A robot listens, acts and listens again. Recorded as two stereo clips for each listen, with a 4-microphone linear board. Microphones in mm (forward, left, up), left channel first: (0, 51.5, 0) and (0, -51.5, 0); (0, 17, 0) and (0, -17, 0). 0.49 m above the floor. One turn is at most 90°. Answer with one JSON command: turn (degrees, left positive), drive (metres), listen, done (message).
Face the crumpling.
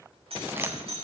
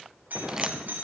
{"listen": true}
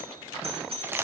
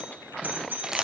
{"turn": -20}
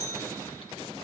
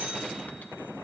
{"listen": true}
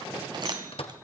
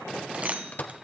{"listen": true}
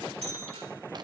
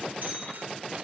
{"done": "I heard crumpling, but can't make it out now. It was about straight ahead or 140° right."}